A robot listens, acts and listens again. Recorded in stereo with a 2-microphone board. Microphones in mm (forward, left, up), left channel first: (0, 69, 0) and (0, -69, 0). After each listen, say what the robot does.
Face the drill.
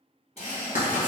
Turn 45° left.
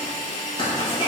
Turn 80° left.
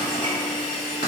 Found it: a drill, straight ahead, 1 to 2 m away.